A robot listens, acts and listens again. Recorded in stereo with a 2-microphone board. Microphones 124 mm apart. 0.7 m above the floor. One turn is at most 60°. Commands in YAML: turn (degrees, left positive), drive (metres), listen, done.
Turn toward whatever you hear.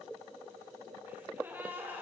turn: -30
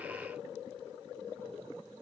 listen: true
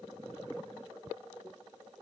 done: "I heard a gasp, but can't make it out now. It was about 15° left or 135° right."